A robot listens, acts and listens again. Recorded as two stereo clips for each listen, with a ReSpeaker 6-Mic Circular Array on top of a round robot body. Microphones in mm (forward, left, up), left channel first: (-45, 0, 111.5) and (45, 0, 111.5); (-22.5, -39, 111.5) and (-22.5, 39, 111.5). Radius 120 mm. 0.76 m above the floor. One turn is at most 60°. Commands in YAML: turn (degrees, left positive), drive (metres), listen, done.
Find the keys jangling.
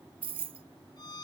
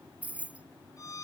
turn: 15
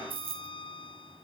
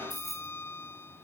done: "Facing the keys jangling."